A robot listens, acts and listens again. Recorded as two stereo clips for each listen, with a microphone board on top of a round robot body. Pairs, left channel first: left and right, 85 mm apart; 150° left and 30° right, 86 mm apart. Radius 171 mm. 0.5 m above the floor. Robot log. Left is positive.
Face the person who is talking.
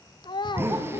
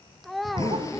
note: The child speaking: 60° left.
cmd yaw +60
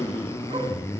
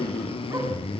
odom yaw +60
cmd idle
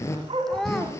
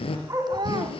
end: Facing the child speaking, 1 to 2 m away.